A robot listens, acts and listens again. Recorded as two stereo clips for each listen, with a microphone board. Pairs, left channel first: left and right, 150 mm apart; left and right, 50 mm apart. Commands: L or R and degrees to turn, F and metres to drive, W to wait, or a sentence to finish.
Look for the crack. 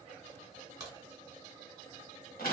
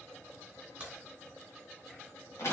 R25
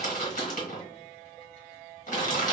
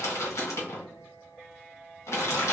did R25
W
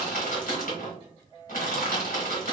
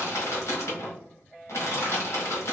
I heard a crack, but can't make it out now. It was about straight ahead or 130° right.